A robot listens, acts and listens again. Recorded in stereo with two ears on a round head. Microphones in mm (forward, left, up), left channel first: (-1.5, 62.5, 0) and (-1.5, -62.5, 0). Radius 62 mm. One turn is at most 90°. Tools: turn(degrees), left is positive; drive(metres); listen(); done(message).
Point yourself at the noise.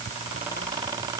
listen()
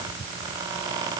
listen()
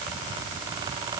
done("I can't make out anything.")